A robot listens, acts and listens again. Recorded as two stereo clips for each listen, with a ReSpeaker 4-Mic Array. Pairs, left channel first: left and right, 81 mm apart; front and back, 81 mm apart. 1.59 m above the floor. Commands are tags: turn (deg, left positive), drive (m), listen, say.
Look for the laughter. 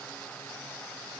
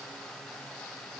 <listen/>
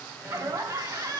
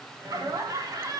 <turn deg="-135"/>
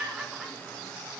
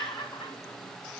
<turn deg="-10"/>
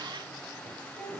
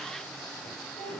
<turn deg="10"/>
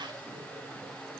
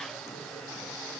<listen/>
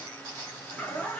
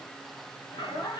<turn deg="15"/>
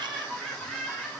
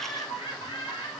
<say>Found it: laughter, straight ahead, 2 to 4 m away.</say>